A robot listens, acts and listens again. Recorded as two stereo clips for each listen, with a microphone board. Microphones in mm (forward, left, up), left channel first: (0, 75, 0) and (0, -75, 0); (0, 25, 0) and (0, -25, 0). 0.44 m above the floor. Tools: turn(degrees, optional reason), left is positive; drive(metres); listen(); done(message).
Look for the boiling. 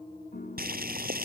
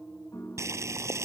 turn(degrees=-90)
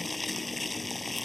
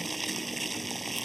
done("Found it: boiling, straight ahead.")